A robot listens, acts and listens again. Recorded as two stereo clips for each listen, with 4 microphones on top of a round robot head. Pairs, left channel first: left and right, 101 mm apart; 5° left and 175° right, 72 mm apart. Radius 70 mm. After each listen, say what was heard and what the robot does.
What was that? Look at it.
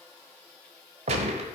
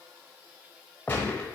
The gunshot: 75° right. Turn 75° right.
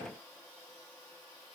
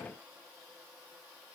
I heard a gunshot from this way, but can't make it out now.